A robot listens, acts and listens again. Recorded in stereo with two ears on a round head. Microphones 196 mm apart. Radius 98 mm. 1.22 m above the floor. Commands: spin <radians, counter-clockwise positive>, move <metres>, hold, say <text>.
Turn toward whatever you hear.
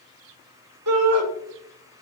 spin -1.57
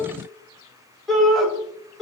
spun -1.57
say Facing the shout, 2 to 4 m away.